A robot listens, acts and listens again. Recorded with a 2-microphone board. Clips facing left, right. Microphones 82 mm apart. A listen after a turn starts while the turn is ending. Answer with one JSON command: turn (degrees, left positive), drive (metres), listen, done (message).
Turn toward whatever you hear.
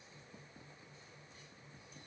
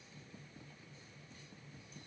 {"listen": true}
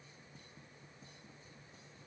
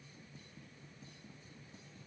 {"listen": true}
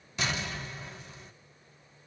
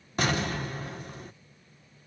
{"turn": -50}
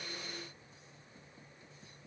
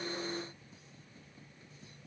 {"listen": true}
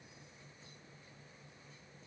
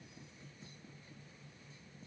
{"done": "I heard an explosion, but can't make it out now. It was about straight ahead or 80° right."}